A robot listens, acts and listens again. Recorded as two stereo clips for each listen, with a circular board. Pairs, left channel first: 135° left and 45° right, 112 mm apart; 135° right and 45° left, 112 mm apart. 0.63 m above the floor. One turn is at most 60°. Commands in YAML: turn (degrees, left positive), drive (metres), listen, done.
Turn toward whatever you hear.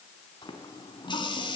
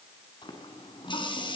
turn: 60
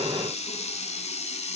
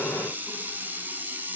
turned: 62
turn: 60
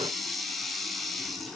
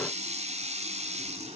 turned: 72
turn: 45
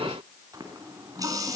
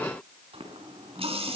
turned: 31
turn: 15
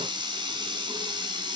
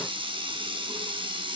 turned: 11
done: "Facing the running tap."